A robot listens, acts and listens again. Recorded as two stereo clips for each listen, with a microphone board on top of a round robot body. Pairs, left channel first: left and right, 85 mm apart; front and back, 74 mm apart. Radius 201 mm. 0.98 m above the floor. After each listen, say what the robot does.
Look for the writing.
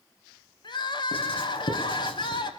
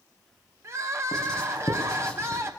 Turn 80° left.
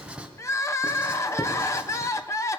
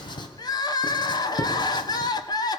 Turn 10° right.
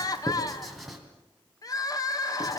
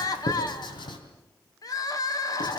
Facing the writing, 2 to 4 m away.